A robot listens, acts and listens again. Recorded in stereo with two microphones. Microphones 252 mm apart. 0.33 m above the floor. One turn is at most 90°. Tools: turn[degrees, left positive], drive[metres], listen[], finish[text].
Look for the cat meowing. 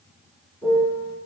Action: listen[]
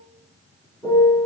Action: listen[]
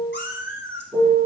Thought: The cat meowing: about 50° left or 130° left.
Action: turn[50]
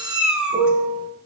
Action: finish[Facing the cat meowing, 1 to 2 m away.]